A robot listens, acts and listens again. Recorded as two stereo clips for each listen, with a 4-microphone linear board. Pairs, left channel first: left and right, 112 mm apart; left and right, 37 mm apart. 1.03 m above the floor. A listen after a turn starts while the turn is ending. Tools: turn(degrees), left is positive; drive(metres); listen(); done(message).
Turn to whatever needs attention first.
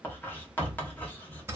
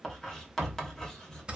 listen()
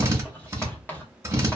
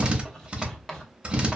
listen()
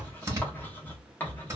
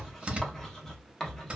done("I can't make out anything urgent, only a drill and writing.")